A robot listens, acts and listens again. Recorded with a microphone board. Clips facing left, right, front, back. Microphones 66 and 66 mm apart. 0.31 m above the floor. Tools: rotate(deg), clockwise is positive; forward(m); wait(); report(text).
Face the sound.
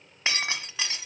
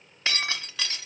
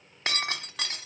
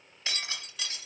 rotate(-25)
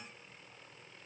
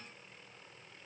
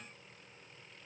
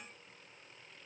report("Facing where the breaking glass came from. I can't hear it now.")